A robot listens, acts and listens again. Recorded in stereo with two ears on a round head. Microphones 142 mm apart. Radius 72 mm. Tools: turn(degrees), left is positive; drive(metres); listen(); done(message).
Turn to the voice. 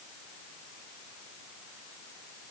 listen()
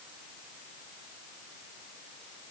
listen()
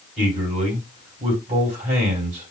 turn(degrees=-50)
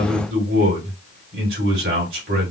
turn(degrees=-75)
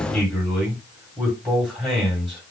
done("Found it: a man speaking, straight ahead.")